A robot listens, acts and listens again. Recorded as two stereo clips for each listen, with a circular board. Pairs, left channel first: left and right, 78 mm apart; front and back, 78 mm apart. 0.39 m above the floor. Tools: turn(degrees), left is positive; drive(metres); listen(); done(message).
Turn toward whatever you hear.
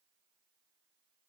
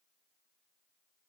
listen()
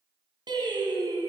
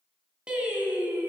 turn(degrees=-110)
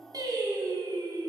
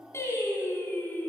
turn(degrees=-65)
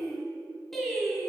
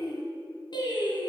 done("Found it: singing, straight ahead.")